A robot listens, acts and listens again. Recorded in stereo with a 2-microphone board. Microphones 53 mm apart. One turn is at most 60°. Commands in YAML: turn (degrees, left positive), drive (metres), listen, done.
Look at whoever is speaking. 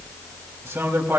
turn: -50
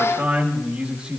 turn: -15
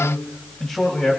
turn: 20
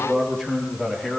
turn: 15
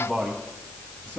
turn: 15
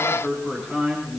done: "Facing the man speaking, 2 to 4 m away."